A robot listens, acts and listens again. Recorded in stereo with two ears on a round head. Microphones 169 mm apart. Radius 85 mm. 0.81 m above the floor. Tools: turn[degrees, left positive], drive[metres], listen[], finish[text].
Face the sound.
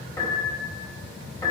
Thought: The piano: about 20° left or 160° left.
Action: turn[20]
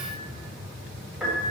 Action: finish[Facing the piano, 2 to 4 m away.]